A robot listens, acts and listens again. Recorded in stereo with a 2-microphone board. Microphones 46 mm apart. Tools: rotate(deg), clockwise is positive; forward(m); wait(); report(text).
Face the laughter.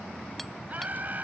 rotate(40)
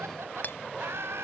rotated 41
rotate(105)
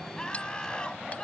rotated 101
rotate(-20)
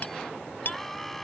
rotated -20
report("Found it: laughter, straight ahead.")